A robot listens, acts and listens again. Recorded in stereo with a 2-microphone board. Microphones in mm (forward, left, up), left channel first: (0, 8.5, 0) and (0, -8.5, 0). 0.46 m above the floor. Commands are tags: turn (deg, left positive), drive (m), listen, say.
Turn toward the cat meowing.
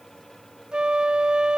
<listen/>
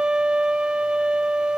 <listen/>
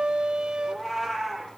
<turn deg="30"/>
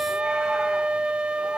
<listen/>
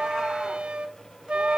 <listen/>
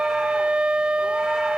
<say>I heard a cat meowing, but can't make it out now. It was about 25° right or 145° left.</say>